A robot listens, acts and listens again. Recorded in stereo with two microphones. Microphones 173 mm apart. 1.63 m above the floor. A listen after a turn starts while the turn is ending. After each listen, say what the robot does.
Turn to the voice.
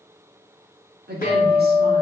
Turn 70° right.
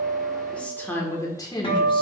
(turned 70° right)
Turn 25° left.
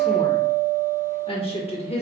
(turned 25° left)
Turn 40° left.
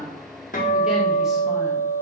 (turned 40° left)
Keep listening.
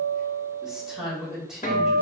Found it: a woman speaking, straight ahead.